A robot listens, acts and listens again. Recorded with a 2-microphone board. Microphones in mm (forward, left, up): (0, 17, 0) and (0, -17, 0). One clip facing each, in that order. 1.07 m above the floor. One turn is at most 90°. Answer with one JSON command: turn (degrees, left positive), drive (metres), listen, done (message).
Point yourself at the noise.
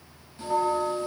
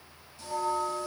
{"turn": 30}
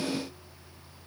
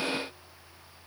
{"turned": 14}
{"listen": true}
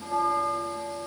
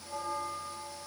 {"turn": 90}
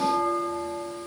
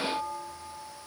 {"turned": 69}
{"turn": 65}
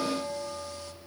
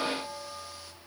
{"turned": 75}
{"turn": -10}
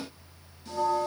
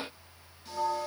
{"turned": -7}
{"done": "Found it: a bell, straight ahead, 1 to 2 m away."}